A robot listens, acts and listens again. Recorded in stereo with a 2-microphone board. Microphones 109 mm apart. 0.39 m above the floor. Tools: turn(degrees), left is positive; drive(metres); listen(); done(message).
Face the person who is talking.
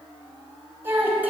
turn(degrees=-15)
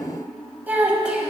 turn(degrees=-30)
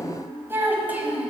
turn(degrees=-30)
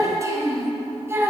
turn(degrees=-20)
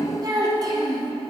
turn(degrees=-140)
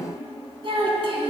turn(degrees=-55)
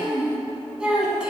turn(degrees=-10)
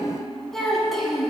done("Found it: a child speaking, straight ahead, 1 to 2 m away.")